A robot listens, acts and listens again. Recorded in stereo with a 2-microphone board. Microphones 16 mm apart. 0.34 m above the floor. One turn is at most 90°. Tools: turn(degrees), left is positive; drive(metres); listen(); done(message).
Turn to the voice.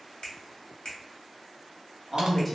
turn(degrees=30)
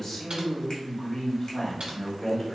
turn(degrees=90)
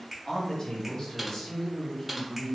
turn(degrees=60)
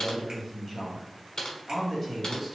done("Found it: a man speaking, straight ahead.")